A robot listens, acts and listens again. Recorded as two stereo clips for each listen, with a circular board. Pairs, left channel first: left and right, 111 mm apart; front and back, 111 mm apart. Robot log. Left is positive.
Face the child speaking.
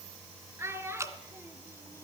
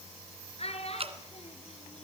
note: The child speaking: 20° right.
cmd yaw -20
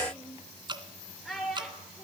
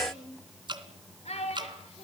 end: Facing the child speaking, over 4 m away.